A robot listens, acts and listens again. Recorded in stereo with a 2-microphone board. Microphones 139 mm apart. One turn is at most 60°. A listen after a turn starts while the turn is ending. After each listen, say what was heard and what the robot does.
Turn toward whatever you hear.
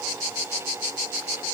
Keep listening.
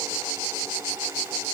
Keep listening.
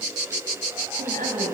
Turn 60° right.
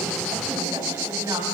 So it is at 30° right. Turn 30° right.
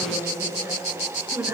The woman speaking is now 20° right. Turn 20° right.
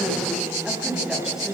Facing the woman speaking, over 4 m away.